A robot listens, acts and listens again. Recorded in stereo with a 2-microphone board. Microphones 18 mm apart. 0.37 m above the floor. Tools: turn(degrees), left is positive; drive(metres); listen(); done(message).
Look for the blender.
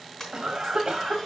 turn(degrees=25)
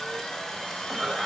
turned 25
turn(degrees=125)
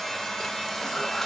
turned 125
turn(degrees=10)
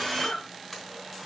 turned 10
done("Facing the blender.")